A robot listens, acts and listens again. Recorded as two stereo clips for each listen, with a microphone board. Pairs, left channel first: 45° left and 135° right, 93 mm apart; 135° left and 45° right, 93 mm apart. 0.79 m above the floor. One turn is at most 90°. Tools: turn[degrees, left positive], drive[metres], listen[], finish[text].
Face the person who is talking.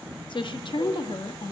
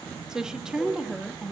Thought: The woman speaking: 35° left.
Action: turn[35]
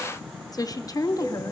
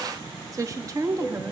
Action: finish[Facing the woman speaking.]